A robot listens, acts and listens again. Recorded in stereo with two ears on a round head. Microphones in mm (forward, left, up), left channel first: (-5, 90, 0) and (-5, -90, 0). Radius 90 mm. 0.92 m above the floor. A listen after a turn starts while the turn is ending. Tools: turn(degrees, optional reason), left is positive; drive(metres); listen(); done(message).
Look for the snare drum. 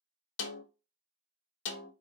turn(degrees=65, reason="The snare drum: about 65° left or 115° left.")
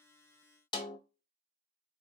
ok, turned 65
turn(degrees=25, reason="So it is at 25° left.")
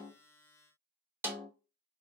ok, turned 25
turn(degrees=-10, reason="The snare drum is now 10° right.")
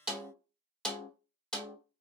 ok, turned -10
done("Found it: a snare drum, straight ahead, under 1 m away.")